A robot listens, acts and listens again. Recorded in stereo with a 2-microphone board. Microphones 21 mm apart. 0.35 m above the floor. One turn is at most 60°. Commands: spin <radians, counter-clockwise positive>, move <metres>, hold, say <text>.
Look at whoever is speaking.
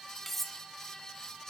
hold
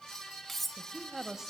spin -0.35
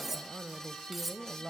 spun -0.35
spin -1.05
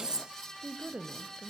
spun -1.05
spin -1.05
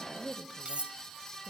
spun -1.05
spin -0.79
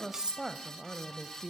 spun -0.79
spin -0.17
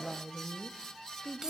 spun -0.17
say Facing the woman speaking.